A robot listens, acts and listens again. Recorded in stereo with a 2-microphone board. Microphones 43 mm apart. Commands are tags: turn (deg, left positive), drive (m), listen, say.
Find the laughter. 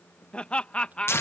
<turn deg="25"/>
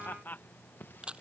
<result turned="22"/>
<turn deg="135"/>
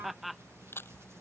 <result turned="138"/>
<say>Facing the laughter.</say>